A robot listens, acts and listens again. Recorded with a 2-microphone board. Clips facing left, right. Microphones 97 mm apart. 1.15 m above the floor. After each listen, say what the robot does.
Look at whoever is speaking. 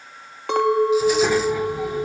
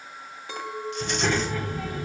Turn 15° left.
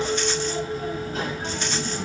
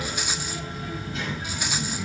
Turn 130° left.
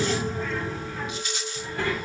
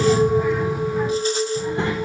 Turn 20° right.
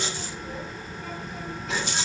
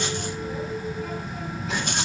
Found it: a child speaking, straight ahead.